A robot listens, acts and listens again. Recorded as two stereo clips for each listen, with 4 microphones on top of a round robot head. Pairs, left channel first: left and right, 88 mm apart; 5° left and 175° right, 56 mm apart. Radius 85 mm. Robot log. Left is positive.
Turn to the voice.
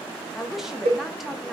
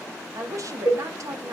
note: The woman speaking: 175° right.
cmd yaw -175
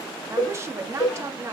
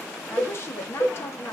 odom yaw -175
note: The woman speaking is now 35° right.
cmd yaw -35
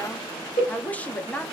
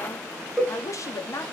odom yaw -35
note: The woman speaking is now 20° left.
cmd yaw +20
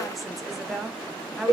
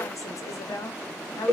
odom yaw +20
end: Facing the woman speaking, 1 to 2 m away.